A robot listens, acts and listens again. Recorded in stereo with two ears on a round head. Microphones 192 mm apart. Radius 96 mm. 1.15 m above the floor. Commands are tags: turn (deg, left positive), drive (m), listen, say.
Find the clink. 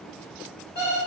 <listen/>
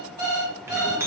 <turn deg="-30"/>
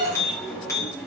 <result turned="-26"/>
<turn deg="15"/>
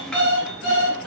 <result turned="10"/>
<say>Found it: a clink, straight ahead.</say>